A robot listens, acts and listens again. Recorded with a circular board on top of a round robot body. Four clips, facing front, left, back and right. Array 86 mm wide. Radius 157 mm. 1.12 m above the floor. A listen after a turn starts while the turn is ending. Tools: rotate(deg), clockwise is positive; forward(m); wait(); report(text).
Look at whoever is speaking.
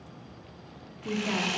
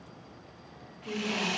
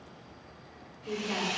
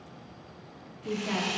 rotate(35)
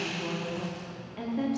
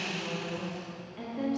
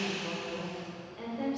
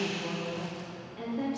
rotate(-10)
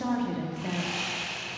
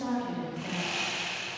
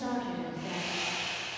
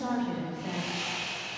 report("Facing the woman speaking, 2 to 4 m away.")